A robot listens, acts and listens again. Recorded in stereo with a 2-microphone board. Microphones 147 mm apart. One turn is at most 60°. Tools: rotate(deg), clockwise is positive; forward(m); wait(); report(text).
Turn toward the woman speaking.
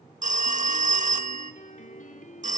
wait()
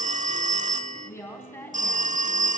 rotate(-15)
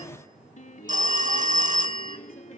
wait()
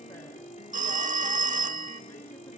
wait()
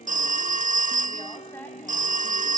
rotate(-30)
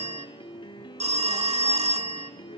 wait()
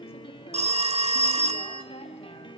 wait()
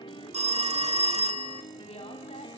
report("I heard a woman speaking, but can't make it out now. It was about 15° right or 135° left.")